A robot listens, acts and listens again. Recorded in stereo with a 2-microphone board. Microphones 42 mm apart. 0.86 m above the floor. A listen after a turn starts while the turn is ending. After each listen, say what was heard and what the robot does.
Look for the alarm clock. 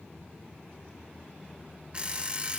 The alarm clock: about 30° right or 150° right. Turn 30° right.
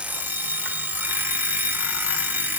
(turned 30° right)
So it is at 120° right. Turn 120° right.
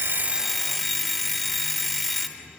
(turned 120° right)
Found it: an alarm clock, straight ahead, under 1 m away.